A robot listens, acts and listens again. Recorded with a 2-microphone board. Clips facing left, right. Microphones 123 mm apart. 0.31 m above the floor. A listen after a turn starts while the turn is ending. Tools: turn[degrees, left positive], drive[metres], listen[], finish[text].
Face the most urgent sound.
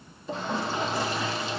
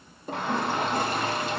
Thought: The shout: about 65° right or 115° right.
Action: turn[-65]
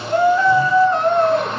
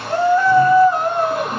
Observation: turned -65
Thought: So it is at 10° right.
Action: turn[-10]
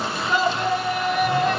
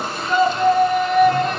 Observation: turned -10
Action: finish[Found it: a shout, straight ahead.]